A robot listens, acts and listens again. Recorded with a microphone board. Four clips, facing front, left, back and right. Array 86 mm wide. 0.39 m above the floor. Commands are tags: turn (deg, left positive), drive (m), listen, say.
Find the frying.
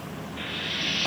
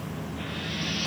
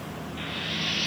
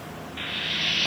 <turn deg="-80"/>
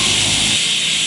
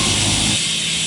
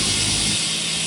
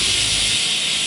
<say>Facing the frying.</say>